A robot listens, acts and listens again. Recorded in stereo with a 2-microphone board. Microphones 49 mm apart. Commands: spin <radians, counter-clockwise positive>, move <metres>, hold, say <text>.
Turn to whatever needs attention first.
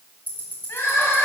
spin 1.13
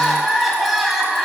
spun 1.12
say Found it: crying, straight ahead, 1 to 2 m away.